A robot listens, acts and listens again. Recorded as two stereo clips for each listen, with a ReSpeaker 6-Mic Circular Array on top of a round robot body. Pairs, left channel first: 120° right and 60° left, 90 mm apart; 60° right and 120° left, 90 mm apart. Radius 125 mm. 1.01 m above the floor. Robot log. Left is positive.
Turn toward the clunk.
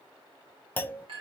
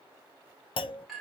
note: The clunk: 50° right.
cmd yaw -50
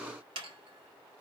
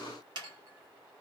end: Facing where the clunk came from. I can't hear it now.